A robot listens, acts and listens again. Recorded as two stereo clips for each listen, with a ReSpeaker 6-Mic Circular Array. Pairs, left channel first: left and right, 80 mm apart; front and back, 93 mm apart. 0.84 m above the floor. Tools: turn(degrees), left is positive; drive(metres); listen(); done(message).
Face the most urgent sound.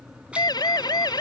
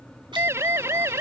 turn(degrees=120)
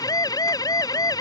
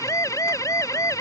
turn(degrees=55)
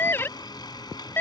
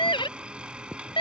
turn(degrees=25)
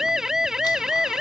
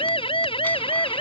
done("Found it: a siren, straight ahead.")